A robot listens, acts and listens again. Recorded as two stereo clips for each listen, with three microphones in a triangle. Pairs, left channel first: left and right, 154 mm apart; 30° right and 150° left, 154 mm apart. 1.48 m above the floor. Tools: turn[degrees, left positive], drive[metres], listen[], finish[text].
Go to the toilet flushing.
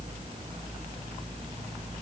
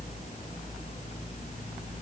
Action: listen[]
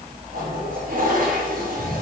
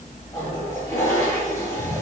Thought: The toilet flushing: 100° right.
Action: turn[-100]
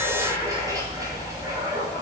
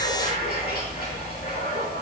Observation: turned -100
Thought: The toilet flushing is now 20° right.
Action: turn[-20]
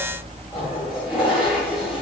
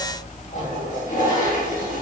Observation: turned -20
Action: drive[1.0]
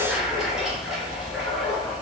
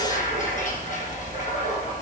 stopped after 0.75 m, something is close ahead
Action: listen[]
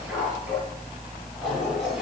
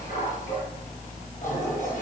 Action: listen[]
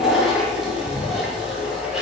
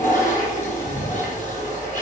Action: finish[Something is in my way. I am facing the toilet flushing but have not reached it.]